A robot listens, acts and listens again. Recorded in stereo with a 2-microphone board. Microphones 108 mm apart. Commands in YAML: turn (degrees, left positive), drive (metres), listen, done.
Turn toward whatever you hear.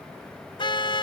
turn: 50
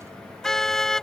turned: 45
done: "Found it: a car horn, straight ahead."